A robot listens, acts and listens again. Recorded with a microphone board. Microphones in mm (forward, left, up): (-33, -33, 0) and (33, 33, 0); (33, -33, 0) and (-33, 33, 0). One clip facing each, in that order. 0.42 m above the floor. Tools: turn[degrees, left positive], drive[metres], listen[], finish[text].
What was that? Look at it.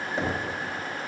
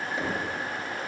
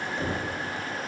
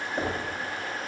Thought: The knocking: 175° left.
Action: turn[175]
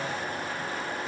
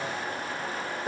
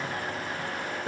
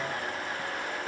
Thought: The knocking is now 10° left.
Action: turn[10]
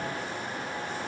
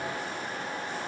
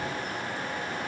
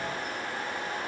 Action: listen[]
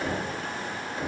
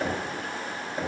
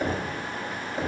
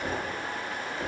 Action: finish[Facing the knocking, 1 to 2 m away.]